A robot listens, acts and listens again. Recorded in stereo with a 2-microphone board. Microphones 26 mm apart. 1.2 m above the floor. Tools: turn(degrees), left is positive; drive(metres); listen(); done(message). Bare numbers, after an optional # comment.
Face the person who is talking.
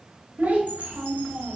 turn(-90)
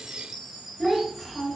done("Found it: a child speaking, straight ahead.")